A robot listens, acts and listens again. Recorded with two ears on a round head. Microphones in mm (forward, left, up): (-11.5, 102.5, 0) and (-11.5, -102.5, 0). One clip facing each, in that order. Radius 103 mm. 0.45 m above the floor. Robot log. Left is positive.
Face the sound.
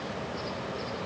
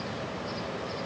cmd idle
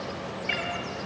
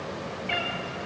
note: The cat meowing: about 60° left or 120° left.
cmd yaw +60
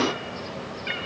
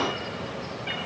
note: So it is at 55° left.
cmd yaw +55
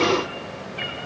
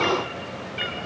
note: The cat meowing is now 25° right.
cmd yaw -25
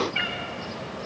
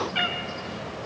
note: The cat meowing is now 20° right.
cmd yaw -20
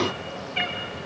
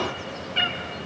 note: The cat meowing is now 15° right.
cmd yaw -15
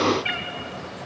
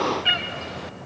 note: The cat meowing is now 10° right.
cmd yaw -10
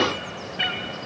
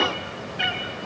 end: Found it: a cat meowing, straight ahead, 2 to 4 m away.